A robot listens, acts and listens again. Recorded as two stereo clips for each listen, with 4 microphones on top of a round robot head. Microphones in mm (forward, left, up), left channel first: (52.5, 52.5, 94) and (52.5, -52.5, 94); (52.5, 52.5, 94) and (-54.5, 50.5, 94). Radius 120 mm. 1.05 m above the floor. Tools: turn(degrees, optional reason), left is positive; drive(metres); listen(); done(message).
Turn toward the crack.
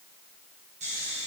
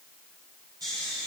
listen()
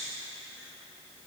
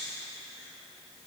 listen()
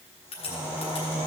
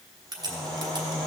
turn(degrees=130, reason="The crack: 130° left.")
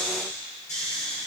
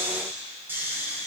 done("Facing where the crack came from. I can't hear it now.")